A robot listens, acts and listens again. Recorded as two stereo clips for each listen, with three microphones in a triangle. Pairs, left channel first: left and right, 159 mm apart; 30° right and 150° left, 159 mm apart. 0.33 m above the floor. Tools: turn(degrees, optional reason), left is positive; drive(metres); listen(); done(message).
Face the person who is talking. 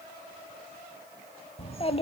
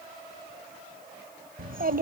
turn(degrees=140, reason="The child speaking: 140° left.")
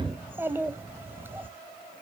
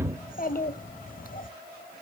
turn(degrees=-15, reason="The child speaking is now 15° right.")
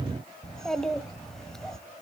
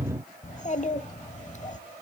done("Facing the child speaking, under 1 m away.")